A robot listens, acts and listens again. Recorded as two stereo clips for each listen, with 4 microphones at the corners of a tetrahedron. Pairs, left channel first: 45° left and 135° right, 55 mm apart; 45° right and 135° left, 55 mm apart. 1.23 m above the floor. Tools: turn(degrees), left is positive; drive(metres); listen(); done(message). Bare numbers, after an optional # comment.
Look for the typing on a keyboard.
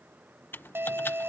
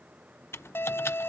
done("Facing the typing on a keyboard.")